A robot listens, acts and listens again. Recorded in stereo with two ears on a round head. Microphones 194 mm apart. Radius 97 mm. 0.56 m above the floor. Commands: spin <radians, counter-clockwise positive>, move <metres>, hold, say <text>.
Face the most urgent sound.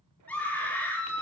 spin 0.52
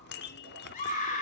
spin 2.44
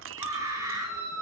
spin -0.26
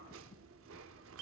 hold
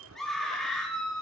say Found it: a scream, straight ahead, over 4 m away.